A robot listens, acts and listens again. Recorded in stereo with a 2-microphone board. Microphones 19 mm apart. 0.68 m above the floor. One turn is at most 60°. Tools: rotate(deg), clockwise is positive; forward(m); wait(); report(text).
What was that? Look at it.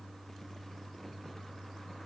wait()
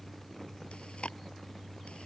rotate(-60)
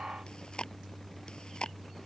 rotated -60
rotate(-45)
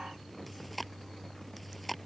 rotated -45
report("Facing the chewing.")